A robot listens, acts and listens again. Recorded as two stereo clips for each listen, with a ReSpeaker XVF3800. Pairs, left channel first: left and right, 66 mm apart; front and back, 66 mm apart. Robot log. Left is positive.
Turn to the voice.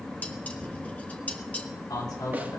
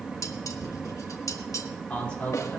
note: The man speaking: 70° left.
cmd yaw +70
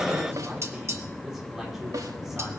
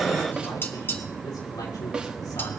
end: Found it: a man speaking, straight ahead.